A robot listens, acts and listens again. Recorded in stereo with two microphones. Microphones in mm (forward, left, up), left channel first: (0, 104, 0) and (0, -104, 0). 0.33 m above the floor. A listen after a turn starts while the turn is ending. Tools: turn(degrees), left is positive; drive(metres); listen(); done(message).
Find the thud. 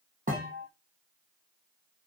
turn(degrees=-40)
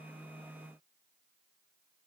listen()
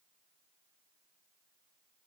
done("I heard a thud, but can't make it out now. It was about straight ahead or 100° right.")